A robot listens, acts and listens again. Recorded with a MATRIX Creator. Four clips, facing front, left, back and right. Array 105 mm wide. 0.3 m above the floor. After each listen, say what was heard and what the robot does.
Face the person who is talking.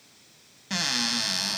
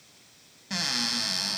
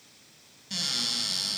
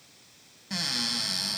Keep listening.
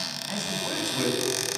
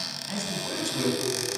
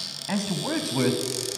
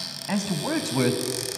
The man speaking: 115° right. Turn 115° right.
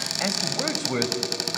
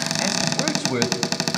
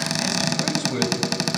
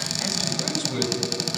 The man speaking is now 65° left. Turn 65° left.
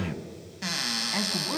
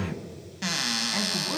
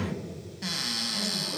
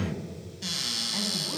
The man speaking is now 25° left. Turn 25° left.
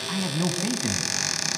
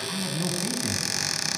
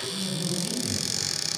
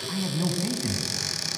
Found it: a man speaking, straight ahead, 2 to 4 m away.